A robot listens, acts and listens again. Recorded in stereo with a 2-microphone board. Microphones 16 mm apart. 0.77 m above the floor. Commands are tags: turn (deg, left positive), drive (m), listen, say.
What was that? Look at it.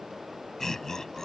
<turn deg="20"/>
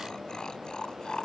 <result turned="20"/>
<turn deg="130"/>
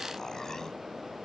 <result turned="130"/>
<listen/>
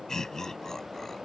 <turn deg="35"/>
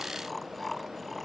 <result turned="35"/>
<turn deg="15"/>
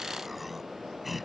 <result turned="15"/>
<say>Found it: laughter, straight ahead.</say>